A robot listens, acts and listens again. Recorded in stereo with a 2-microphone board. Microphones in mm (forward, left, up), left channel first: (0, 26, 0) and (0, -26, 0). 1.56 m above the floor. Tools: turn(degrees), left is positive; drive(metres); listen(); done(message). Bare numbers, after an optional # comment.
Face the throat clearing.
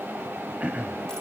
# The throat clearing: about 25° right or 155° right.
turn(-25)
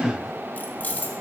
listen()
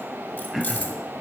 done("Found it: throat clearing, straight ahead.")